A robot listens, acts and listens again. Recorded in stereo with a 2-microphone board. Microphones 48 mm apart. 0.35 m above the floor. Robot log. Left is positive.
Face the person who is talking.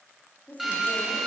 note: The woman speaking: about 35° left or 145° left.
cmd yaw +35
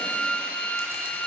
cmd idle
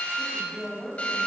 end: Facing the woman speaking, 1 to 2 m away.